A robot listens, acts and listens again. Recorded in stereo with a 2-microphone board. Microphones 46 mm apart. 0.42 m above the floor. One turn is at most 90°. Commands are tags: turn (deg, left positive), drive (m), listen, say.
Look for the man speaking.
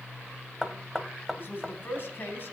<turn deg="50"/>
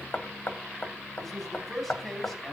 <say>Facing the man speaking.</say>